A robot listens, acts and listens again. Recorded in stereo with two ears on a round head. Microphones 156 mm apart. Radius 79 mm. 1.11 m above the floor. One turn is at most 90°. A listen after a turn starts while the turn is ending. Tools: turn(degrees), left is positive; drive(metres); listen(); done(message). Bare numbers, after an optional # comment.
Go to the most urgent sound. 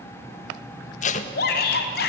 # The shout: about 65° left or 115° left.
turn(65)
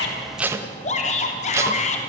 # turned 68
# So it is at 45° left.
turn(45)
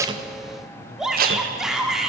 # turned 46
drive(1.0)
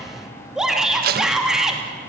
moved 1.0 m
drive(1.0)
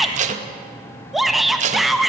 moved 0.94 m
drive(1.0)
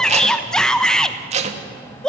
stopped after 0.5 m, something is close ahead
done("Arrived at the shout, straight ahead.")